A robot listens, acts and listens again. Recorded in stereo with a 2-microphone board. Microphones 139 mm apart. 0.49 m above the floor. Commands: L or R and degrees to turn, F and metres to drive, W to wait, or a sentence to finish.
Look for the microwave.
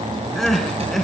W
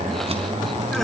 W
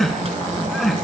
I can't make out a microwave, only crying.